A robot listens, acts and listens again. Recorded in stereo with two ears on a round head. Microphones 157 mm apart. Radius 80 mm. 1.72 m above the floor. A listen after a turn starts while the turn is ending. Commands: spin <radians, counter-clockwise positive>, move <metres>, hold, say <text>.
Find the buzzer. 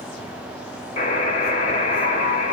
spin 0.70
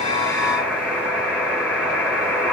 say Found it: a buzzer, straight ahead, 2 to 4 m away.